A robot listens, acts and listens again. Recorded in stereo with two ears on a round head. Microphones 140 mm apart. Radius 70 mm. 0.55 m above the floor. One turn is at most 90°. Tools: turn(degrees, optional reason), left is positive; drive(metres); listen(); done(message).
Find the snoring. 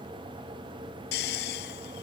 turn(degrees=70, reason="The snoring: about 70° left or 110° left.")
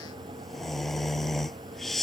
done("Facing the snoring.")